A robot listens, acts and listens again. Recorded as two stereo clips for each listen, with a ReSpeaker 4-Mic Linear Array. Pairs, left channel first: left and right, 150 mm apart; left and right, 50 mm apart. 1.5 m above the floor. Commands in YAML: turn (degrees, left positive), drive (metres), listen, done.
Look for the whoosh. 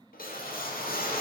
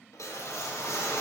turn: 90
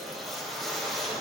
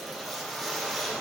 done: "Facing the whoosh, under 1 m away."